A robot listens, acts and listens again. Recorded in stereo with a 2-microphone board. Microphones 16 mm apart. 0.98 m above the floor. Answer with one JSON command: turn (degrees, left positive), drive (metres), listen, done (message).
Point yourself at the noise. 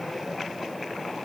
{"listen": true}
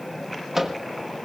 {"turn": -25}
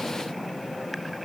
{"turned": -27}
{"listen": true}
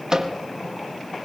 {"turn": -130}
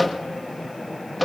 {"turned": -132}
{"done": "Facing the microwave, 1 to 2 m away."}